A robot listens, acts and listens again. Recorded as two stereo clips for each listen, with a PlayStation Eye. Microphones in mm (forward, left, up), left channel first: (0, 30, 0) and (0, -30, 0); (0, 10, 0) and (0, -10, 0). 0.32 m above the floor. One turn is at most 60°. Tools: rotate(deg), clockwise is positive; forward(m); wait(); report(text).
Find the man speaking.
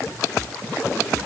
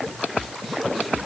wait()
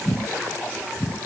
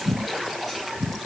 wait()
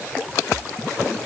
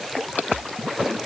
report("I can't make out a man speaking.")